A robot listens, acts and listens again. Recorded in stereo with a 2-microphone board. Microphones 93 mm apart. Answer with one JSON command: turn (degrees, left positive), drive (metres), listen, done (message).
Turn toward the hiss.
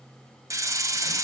{"turn": -35}
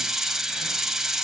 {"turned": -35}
{"done": "Facing the hiss, 1 to 2 m away."}